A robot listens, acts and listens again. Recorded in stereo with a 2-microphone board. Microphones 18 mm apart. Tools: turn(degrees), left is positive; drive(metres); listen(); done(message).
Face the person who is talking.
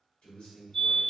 turn(degrees=90)
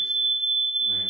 listen()
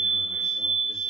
listen()
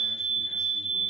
done("Facing where the man speaking came from. I can't hear it now.")